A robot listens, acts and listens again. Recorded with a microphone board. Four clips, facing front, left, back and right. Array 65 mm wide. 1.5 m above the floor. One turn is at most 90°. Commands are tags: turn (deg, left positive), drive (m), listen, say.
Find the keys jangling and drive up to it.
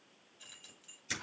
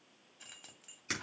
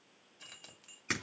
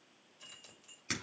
<turn deg="90"/>
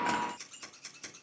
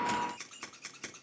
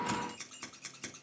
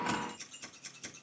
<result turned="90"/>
<turn deg="75"/>
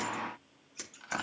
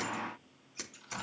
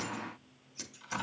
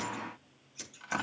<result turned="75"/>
<listen/>
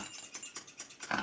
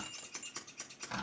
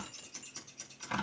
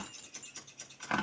<turn deg="35"/>
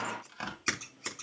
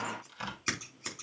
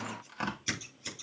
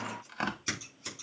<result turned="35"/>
<listen/>
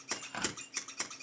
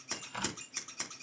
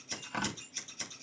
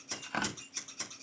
<turn deg="-10"/>
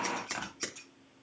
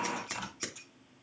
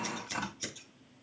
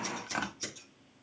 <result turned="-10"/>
<listen/>
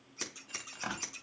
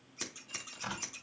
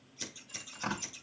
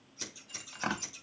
<drive m="1.0"/>
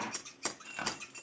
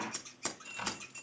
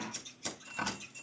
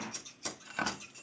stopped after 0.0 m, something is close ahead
<say>Blocked. The keys jangling is further on, straight ahead.</say>